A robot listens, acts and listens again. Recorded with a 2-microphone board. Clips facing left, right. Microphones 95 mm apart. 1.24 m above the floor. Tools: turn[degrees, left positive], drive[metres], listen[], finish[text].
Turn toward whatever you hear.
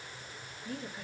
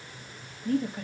Thought: The woman speaking: about 55° right or 125° right.
Action: turn[-55]
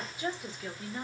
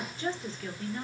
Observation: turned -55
Thought: So it is at 20° left.
Action: turn[20]
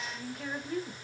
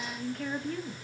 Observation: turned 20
Thought: The woman speaking is now 15° left.
Action: turn[15]
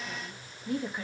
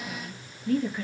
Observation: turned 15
Thought: The woman speaking is now 20° left.
Action: turn[20]
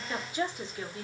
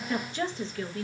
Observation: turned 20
Thought: The woman speaking is now 20° left.
Action: turn[20]
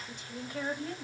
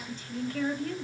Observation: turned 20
Thought: The woman speaking is now 20° left.
Action: turn[20]
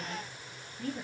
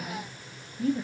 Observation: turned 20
Thought: The woman speaking is now 10° right.
Action: turn[-10]
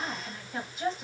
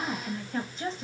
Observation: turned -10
Action: finish[Found it: a woman speaking, straight ahead, 1 to 2 m away.]